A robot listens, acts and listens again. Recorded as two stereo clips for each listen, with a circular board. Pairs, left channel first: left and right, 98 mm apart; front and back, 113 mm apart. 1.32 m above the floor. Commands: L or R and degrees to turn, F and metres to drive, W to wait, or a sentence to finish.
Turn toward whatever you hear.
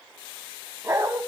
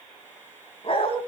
R30
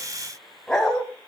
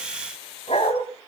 L10
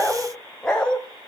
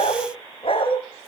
L15
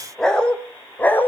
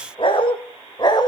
L30
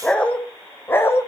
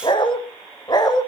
L35
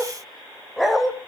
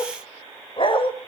Found it: a dog barking, straight ahead, 1 to 2 m away.